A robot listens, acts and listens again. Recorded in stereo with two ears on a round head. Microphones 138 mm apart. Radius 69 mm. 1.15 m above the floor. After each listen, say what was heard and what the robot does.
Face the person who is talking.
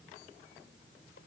Keep listening.
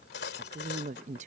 The woman speaking: about 50° right or 130° right. Turn 50° right.
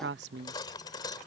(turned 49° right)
So it is at 80° right. Turn 80° right.
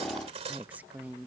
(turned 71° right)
The woman speaking is now 10° right. Turn 10° right.
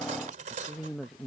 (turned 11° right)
Found it: a woman speaking, straight ahead.